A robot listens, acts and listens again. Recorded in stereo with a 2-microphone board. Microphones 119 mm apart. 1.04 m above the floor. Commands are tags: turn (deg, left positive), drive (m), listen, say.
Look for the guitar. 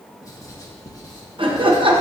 <listen/>
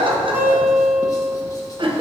<turn deg="-30"/>
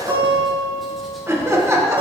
<turn deg="-135"/>
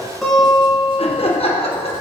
<say>Found it: a guitar, straight ahead, 2 to 4 m away.</say>